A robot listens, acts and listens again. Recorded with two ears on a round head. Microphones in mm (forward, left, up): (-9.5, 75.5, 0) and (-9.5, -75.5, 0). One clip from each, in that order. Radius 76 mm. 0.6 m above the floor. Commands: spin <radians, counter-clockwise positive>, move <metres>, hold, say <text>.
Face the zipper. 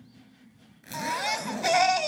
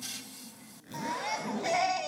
spin 0.79
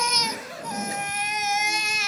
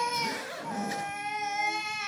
say Facing the zipper, over 4 m away.